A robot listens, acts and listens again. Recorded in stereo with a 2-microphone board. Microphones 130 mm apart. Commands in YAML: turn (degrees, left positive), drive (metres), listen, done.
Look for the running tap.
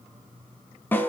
listen: true
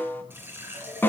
turn: -15
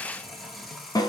done: "Facing the running tap."